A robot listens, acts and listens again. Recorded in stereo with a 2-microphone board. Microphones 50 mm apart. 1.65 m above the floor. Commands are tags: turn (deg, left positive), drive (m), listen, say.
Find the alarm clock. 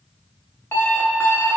<turn deg="50"/>
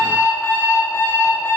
<turn deg="65"/>
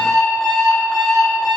<turn deg="10"/>
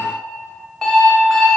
<say>Facing the alarm clock, 1 to 2 m away.</say>